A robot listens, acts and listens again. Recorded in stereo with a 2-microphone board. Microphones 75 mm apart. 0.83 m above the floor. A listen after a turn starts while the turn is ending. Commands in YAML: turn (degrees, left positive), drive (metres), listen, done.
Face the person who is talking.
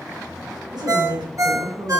turn: -90
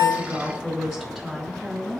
done: "Found it: a woman speaking, straight ahead."